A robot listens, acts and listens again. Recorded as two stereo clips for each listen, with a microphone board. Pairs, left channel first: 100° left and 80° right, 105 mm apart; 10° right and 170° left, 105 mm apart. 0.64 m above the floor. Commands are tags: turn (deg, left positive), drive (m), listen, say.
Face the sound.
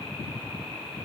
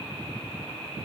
<listen/>
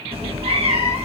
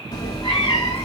<turn deg="-60"/>
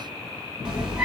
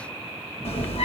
<say>Facing the cat meowing, 2 to 4 m away.</say>